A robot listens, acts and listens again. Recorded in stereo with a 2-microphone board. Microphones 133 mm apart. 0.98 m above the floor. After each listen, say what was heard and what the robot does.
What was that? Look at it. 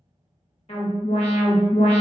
The alarm: about 50° left or 130° left. Turn 50° left.
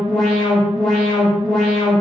Found it: an alarm, straight ahead.